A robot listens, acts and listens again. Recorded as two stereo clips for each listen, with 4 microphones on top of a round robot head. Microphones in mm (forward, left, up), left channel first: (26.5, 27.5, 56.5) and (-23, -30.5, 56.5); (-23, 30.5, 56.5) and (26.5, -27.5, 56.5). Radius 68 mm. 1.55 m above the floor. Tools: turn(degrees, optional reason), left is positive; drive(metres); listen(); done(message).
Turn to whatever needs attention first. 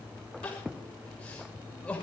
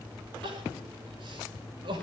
turn(degrees=-30, reason="The crying: 30° right.")
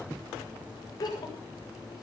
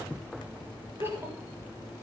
turn(degrees=10, reason="The crying is now 10° left.")
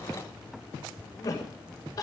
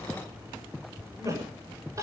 done("Facing the crying.")